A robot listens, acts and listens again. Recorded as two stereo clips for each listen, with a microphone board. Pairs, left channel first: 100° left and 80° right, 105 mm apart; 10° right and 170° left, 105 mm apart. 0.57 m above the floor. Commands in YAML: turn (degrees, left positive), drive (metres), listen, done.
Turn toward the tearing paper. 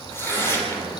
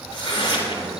turn: 30
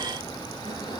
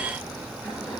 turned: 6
turn: 25
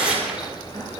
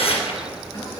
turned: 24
done: "Found it: tearing paper, straight ahead."